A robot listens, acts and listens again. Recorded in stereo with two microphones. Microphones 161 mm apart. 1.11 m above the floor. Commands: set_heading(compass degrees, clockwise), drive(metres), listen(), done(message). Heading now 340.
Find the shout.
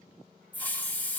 listen()
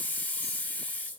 listen()
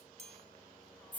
done("I can't make out a shout, only a hiss and a chime.")